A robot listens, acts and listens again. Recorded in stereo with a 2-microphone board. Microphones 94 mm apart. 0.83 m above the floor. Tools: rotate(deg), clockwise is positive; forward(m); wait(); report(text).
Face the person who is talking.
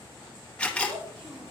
rotate(90)
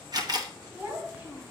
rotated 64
rotate(20)
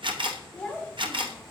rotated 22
report("Found it: a child speaking, straight ahead, 1 to 2 m away.")